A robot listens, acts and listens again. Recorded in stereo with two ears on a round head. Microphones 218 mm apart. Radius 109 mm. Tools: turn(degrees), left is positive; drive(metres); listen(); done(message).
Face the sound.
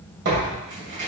turn(degrees=-45)
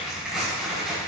done("Facing the tearing paper.")